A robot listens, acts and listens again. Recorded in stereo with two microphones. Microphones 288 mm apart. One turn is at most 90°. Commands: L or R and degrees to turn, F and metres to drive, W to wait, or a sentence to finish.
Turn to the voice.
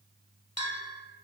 W
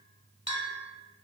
W
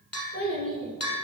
R50
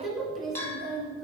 Facing the child speaking.